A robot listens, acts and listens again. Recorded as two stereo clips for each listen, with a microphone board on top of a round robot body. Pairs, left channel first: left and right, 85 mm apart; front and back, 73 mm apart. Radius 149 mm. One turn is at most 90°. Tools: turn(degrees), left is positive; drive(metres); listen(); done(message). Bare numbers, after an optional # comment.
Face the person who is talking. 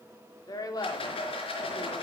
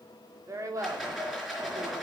# The woman speaking: 135° left.
turn(90)
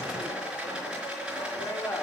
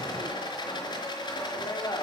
# The woman speaking is now 25° left.
turn(25)
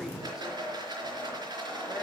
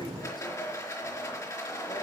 listen()
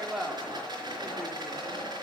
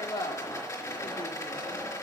# The woman speaking is now 10° right.
turn(-10)
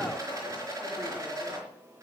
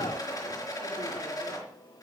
listen()
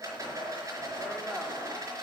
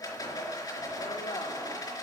done("Facing the woman speaking.")